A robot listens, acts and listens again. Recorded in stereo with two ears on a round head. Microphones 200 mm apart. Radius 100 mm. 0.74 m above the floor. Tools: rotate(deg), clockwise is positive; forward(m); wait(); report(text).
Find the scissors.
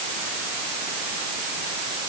wait()
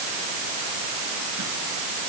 wait()
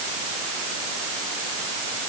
report("I can't make out scissors to turn to.")